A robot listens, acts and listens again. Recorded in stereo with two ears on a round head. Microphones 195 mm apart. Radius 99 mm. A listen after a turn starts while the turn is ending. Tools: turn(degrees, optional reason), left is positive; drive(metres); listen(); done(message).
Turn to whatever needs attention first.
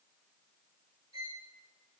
listen()
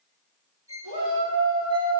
turn(degrees=-70, reason="The shout: about 70° right or 110° right.")
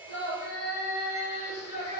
turn(degrees=-35, reason="So it is at 35° right.")
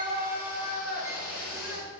done("Found it: a shout, straight ahead.")